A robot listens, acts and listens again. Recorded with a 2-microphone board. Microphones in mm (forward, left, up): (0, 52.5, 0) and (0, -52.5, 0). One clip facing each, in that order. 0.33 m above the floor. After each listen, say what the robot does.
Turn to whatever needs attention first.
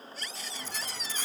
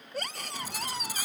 Turn 55° right.
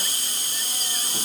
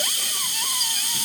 Keep listening.
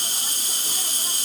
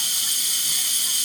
Keep listening.
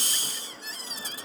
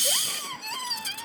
Turn 65° right.
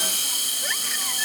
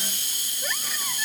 Keep listening.
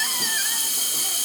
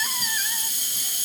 Keep listening.
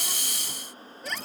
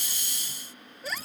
Facing the scream.